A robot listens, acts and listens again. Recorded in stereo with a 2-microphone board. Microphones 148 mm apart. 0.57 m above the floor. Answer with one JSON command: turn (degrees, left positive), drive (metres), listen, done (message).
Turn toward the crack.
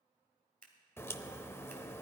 {"turn": 15}
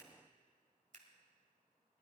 {"listen": true}
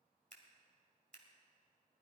{"done": "I heard a crack, but can't make it out now. It was about straight ahead or 150° left."}